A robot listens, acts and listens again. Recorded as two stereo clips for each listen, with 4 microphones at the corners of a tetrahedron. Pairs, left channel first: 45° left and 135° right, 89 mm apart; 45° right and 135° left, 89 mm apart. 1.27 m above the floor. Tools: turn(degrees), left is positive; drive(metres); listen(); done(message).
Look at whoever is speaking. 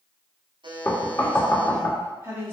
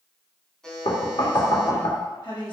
turn(degrees=-75)
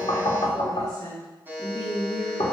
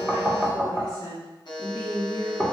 turn(degrees=10)
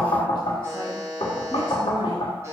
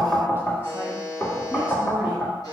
listen()
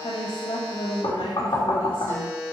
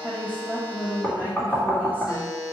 turn(degrees=25)
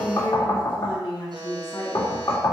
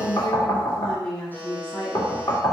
done("Found it: a woman speaking, straight ahead, 1 to 2 m away.")